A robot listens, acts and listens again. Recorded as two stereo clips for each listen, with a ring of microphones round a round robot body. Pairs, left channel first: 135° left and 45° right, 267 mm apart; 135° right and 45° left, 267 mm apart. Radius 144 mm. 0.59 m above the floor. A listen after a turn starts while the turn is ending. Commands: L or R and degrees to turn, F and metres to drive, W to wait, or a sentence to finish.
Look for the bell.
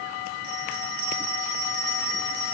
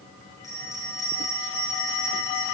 R55
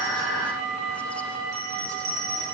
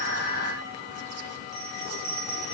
R20
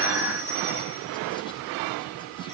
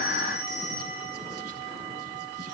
W
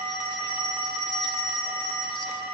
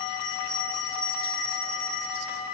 Found it: a bell, straight ahead.